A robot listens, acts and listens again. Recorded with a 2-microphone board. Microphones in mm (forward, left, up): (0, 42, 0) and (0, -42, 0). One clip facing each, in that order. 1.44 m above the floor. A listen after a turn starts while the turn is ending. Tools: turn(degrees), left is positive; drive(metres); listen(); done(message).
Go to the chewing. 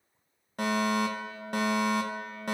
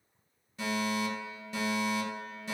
listen()
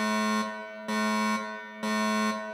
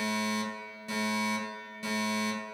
listen()
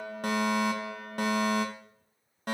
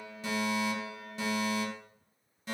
done("I can't make out chewing, only a fire alarm.")